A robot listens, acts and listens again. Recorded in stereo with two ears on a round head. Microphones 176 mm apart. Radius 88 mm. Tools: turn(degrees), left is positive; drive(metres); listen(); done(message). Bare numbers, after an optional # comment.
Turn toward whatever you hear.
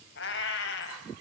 # The cat meowing: about 65° left or 115° left.
turn(65)
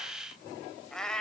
done("Facing the cat meowing.")